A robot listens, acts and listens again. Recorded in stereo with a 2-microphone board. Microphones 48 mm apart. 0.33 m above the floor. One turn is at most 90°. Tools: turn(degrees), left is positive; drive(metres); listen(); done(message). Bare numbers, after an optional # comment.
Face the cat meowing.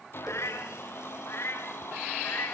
# The cat meowing: about 55° left or 125° left.
turn(55)
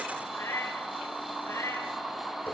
# So it is at 75° left.
turn(75)
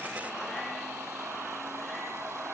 listen()
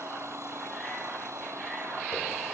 listen()
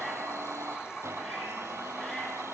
done("Facing where the cat meowing came from. I can't hear it now.")